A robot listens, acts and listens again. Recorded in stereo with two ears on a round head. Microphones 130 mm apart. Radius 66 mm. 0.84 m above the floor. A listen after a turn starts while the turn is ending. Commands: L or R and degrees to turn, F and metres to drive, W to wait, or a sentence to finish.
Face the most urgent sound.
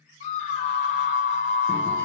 L50
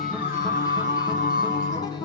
L70
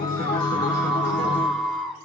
Found it: a scream, straight ahead, 1 to 2 m away.